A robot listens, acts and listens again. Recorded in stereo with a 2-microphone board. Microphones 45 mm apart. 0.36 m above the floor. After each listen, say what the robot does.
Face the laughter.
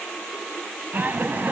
Turn 45° right.
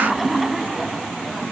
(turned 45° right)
Facing the laughter, 2 to 4 m away.